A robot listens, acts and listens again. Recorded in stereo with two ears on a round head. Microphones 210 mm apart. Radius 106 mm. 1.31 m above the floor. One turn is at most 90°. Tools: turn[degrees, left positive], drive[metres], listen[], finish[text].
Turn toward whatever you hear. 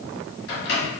Thought: The microwave: about 50° left or 130° left.
Action: turn[50]
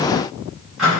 Action: finish[Found it: a microwave, straight ahead.]